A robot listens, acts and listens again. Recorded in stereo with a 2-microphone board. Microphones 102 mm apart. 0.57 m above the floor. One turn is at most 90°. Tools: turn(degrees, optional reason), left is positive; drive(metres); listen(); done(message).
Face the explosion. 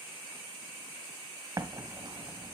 turn(degrees=-35, reason="The explosion: about 35° right or 145° right.")
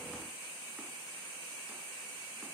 listen()
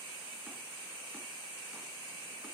done("I heard an explosion, but can't make it out now. It was about straight ahead or 110° right.")